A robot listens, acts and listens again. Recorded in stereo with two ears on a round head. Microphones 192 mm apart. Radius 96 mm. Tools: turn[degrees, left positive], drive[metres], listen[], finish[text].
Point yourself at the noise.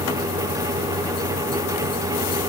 Action: listen[]
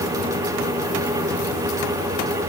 Action: listen[]
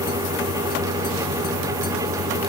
Action: finish[I can't make out anything to turn to.]